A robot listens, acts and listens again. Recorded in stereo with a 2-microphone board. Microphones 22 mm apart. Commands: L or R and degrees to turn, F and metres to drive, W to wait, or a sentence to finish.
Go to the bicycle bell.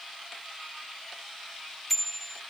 L30
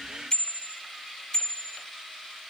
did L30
L145
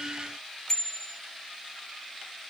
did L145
L30
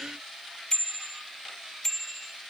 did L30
L20
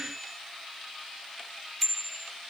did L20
F1.0
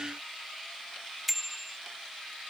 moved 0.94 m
F1.0
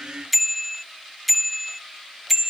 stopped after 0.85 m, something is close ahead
Arrived at the bicycle bell, straight ahead.